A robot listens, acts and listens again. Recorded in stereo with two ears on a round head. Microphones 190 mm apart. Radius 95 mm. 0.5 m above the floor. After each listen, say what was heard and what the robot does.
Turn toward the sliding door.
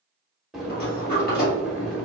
The sliding door: about 40° left or 140° left. Turn 40° left.
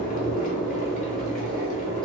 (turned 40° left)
Keep listening.
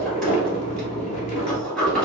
Found it: a sliding door, straight ahead.